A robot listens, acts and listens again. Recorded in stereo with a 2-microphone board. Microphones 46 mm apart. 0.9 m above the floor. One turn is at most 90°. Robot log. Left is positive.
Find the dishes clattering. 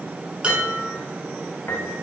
note: The dishes clattering: about 25° right or 155° right.
cmd yaw -25
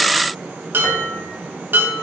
note: So it is at 135° right.
cmd yaw -90
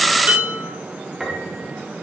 note: The dishes clattering is now 45° right.
cmd yaw -45
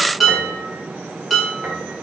end: Facing the dishes clattering.